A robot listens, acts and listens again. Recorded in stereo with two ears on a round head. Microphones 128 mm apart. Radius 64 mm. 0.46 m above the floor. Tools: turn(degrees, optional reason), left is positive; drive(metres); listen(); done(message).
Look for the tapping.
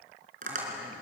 turn(degrees=-55, reason="The tapping: about 55° right or 125° right.")
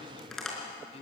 done("Found it: tapping, straight ahead.")